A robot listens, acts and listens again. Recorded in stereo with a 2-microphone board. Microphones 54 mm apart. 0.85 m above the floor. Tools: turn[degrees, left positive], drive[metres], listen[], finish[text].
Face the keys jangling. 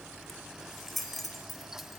Action: turn[30]
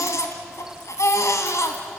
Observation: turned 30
Action: listen[]
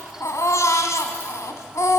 Action: listen[]
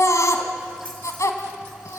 Action: finish[I heard keys jangling, but can't make it out now. It was about 30° right or 150° left.]